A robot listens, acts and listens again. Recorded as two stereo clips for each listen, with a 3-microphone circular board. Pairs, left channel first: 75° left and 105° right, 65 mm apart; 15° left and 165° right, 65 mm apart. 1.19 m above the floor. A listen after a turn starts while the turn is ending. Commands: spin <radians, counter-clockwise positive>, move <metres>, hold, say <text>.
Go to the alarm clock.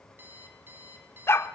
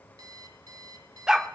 spin -2.88
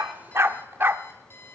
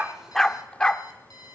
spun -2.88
spin 0.35
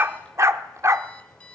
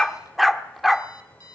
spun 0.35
move 1.0
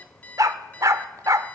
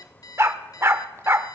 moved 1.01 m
spin 0.17
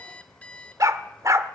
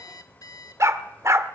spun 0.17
move 1.0
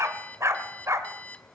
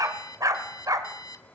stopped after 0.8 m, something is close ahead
say I am next to the alarm clock.